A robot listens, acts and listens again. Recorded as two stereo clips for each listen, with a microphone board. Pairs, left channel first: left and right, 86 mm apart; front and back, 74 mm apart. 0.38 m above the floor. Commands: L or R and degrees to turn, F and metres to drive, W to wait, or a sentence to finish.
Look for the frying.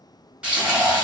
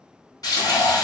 R15
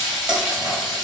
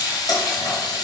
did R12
Facing the frying, 1 to 2 m away.